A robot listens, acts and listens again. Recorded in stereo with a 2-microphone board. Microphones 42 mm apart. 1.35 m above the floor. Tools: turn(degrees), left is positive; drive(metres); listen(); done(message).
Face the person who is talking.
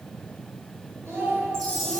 turn(degrees=-90)
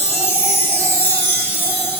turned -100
turn(degrees=10)
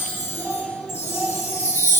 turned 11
turn(degrees=35)
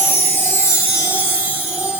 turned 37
listen()
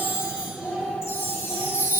done("Facing the child speaking.")